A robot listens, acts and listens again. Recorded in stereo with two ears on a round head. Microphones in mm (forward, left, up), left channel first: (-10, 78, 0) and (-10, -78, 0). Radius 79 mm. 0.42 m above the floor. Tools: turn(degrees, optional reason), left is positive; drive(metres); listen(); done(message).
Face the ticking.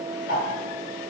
turn(degrees=50, reason="The ticking: about 50° left or 130° left.")
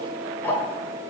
turn(degrees=15, reason="So it is at 15° left.")
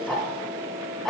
done("Found it: ticking, straight ahead.")